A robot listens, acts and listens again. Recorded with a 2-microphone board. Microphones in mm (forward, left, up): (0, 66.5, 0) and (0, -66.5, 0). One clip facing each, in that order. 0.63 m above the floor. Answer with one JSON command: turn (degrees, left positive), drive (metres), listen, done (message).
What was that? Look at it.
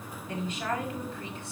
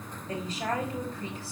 {"turn": -35}
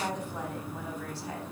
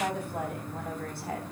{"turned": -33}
{"turn": -120}
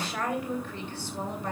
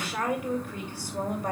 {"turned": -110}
{"turn": -15}
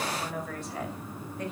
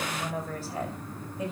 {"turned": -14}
{"turn": -10}
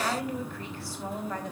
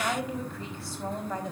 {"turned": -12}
{"done": "Facing the woman speaking, 2 to 4 m away."}